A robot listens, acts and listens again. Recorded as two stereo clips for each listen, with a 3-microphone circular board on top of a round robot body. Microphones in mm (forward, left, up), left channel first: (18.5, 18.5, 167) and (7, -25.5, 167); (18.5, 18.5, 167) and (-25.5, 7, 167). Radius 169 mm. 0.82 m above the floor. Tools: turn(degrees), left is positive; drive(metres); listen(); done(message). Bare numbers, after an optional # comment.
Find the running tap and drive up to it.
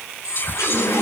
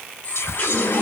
# The running tap: 70° left.
turn(70)
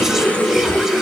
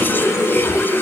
# The running tap is now 15° left.
turn(15)
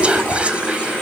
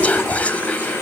drive(1.0)
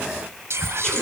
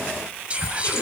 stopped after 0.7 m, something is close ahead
done("Something is in my way. I am facing the running tap but have not reached it.")